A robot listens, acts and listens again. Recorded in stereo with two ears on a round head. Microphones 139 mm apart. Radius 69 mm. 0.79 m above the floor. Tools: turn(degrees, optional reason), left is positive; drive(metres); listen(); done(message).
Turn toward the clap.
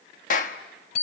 turn(degrees=55, reason="The clap: about 55° left or 125° left.")
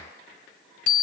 listen()
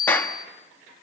turn(degrees=15, reason="So it is at 15° left.")
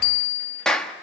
done("Facing the clap.")